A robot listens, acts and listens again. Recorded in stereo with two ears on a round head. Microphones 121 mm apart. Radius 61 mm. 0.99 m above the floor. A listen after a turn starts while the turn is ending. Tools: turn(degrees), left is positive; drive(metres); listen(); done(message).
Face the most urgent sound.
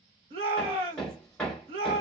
turn(degrees=-45)
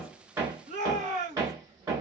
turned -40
turn(degrees=-85)
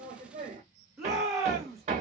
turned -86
done("Found it: a shout, straight ahead, 1 to 2 m away.")